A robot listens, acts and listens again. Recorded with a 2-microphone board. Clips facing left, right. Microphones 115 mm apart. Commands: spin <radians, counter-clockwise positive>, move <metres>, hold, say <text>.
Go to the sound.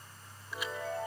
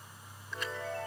spin 0.52
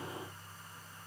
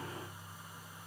hold
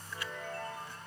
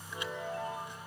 spin -0.44
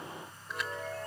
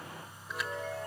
move 1.0
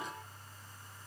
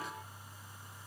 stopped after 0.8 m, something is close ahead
hold
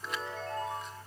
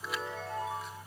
say Arrived at the chime, straight ahead.